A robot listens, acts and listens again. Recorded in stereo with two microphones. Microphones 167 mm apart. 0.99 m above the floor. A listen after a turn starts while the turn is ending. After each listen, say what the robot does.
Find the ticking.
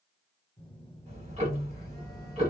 Turn 45° right.
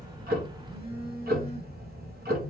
Turn 90° right.
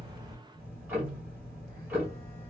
Turn 10° right.
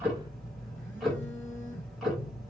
Found it: ticking, straight ahead.